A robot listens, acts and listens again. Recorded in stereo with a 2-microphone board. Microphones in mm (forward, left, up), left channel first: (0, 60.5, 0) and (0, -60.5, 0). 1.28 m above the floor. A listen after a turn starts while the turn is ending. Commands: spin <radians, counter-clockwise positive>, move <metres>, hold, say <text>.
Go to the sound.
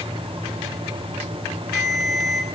spin 0.52
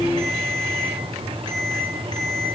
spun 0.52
spin 2.53
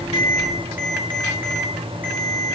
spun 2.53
spin -0.26
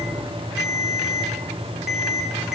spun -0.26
move 1.0
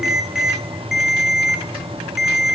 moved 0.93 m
move 1.0
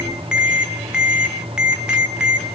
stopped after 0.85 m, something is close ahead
say Arrived at the ringtone, straight ahead.